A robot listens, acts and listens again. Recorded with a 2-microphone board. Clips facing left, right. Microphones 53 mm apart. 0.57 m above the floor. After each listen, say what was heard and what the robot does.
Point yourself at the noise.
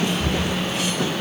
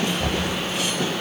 The knocking: about 45° right or 135° right. Turn 45° right.
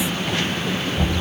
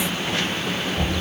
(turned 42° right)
Found it: knocking, straight ahead, 2 to 4 m away.